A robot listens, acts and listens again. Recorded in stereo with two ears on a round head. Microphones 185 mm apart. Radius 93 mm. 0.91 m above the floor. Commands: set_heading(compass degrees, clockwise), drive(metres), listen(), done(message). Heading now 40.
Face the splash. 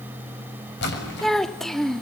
set_heading(345)
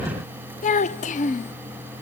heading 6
listen()
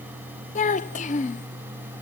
done("I heard a splash, but can't make it out now. It was about 20° left or 90° left.")